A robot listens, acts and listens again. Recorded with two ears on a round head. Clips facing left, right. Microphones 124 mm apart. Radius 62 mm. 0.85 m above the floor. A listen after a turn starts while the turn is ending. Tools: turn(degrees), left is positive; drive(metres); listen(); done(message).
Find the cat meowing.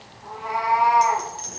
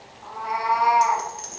turn(degrees=-60)
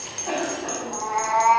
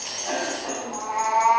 done("Found it: a cat meowing, straight ahead.")